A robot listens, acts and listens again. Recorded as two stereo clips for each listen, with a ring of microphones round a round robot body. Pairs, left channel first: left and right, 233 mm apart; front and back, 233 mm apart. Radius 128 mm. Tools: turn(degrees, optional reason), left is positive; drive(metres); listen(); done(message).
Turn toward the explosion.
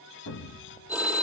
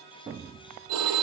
turn(degrees=110, reason="The explosion: 110° left.")
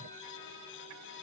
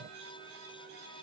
done("Facing where the explosion came from. I can't hear it now.")